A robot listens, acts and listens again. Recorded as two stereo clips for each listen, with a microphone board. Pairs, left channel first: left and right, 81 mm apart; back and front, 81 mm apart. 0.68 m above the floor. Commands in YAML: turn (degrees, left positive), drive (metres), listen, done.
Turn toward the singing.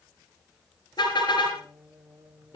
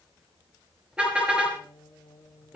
turn: -135
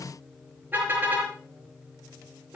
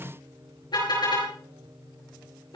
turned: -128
done: "Found it: singing, straight ahead, 1 to 2 m away."